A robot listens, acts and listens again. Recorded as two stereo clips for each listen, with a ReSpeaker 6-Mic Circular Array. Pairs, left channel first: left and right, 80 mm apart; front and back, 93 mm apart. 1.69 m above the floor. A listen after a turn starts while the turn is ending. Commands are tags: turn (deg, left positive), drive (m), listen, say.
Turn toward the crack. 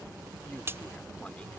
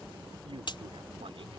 <turn deg="-30"/>
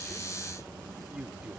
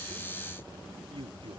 <say>I heard a crack from this way, but can't make it out now.</say>